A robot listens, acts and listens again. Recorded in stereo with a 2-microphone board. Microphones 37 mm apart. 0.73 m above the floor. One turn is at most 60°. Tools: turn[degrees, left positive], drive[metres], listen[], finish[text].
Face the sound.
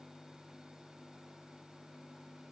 Action: listen[]
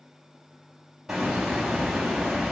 Action: turn[-30]
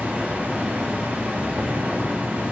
Thought: So it is at 140° right.
Action: turn[-60]
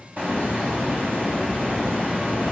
Thought: The hiss is now 50° right.
Action: turn[-50]
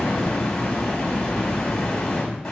Thought: The hiss is now 20° left.
Action: turn[20]
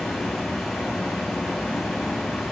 Action: finish[Found it: a hiss, straight ahead, over 4 m away.]